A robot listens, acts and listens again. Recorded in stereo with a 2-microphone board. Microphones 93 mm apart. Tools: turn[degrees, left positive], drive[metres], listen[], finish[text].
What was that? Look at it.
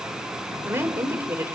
Thought: The woman speaking: about 30° right or 150° right.
Action: turn[-30]
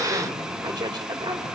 Thought: So it is at 125° right.
Action: turn[-125]
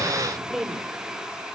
Action: finish[Facing the woman speaking, over 4 m away.]